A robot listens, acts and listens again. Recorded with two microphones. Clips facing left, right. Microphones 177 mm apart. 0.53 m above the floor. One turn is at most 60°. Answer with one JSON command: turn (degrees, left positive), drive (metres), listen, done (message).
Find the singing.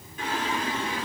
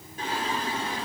{"turn": -35}
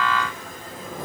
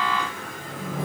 {"turn": -60}
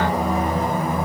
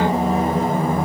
{"turn": -30}
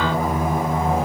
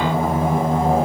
{"turn": -30}
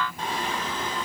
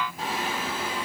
{"turn": -10}
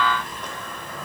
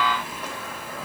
{"turn": -10}
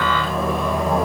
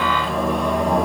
{"done": "Facing the singing, 1 to 2 m away."}